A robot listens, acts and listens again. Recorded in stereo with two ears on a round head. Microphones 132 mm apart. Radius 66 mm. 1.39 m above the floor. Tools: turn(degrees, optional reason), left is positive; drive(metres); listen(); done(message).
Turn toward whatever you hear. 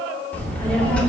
turn(degrees=30)
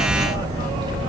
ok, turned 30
turn(degrees=-30, reason="So it is at 30° right.")
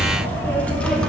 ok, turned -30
done("Found it: a child speaking, straight ahead.")